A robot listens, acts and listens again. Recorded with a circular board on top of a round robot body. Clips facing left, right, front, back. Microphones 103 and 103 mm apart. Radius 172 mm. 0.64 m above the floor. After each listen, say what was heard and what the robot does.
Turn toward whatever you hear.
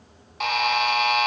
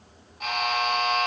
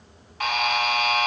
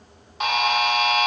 The buzzer: 110° left. Turn 110° left.
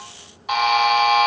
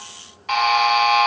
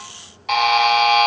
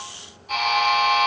The buzzer is now 15° left. Turn 15° left.
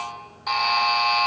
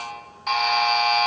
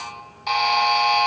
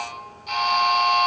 Found it: a buzzer, straight ahead, 1 to 2 m away.